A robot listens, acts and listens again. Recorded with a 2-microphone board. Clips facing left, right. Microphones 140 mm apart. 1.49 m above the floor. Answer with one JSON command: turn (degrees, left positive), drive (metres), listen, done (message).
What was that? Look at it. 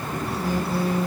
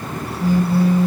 {"turn": 45}
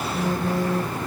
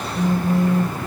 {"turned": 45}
{"turn": 95}
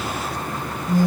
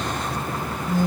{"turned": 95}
{"turn": 10}
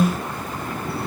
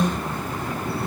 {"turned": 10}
{"done": "Found it: a phone buzzing, straight ahead."}